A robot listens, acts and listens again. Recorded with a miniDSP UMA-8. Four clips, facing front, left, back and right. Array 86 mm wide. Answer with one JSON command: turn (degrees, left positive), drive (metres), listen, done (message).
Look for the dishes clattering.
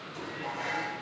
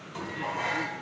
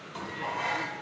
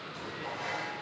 {"turn": 130}
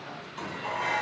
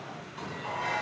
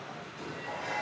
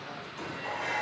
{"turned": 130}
{"done": "Found it: dishes clattering, straight ahead."}